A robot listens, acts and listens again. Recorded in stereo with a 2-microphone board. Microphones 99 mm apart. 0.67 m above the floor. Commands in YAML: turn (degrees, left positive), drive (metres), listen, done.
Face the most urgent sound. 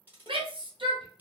turn: -60
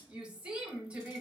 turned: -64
turn: -10
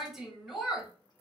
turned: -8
done: "Facing the shout."